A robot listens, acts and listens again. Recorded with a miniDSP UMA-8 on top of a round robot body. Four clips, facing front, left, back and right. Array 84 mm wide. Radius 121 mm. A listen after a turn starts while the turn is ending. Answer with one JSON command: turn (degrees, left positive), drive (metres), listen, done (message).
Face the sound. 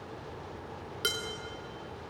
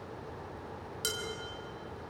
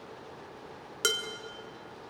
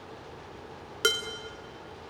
{"turn": -105}
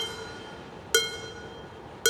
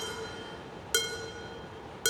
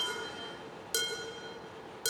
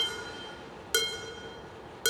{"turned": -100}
{"done": "Found it: dishes clattering, straight ahead."}